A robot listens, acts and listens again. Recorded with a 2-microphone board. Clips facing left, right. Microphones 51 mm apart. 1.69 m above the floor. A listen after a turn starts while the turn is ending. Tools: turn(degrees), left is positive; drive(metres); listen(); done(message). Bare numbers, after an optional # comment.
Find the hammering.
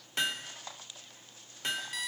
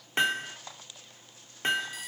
# The hammering: about 30° right or 150° right.
turn(-30)
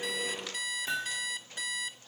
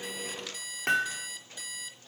# So it is at 115° right.
turn(-115)
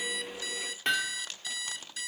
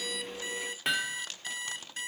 done("Found it: hammering, straight ahead.")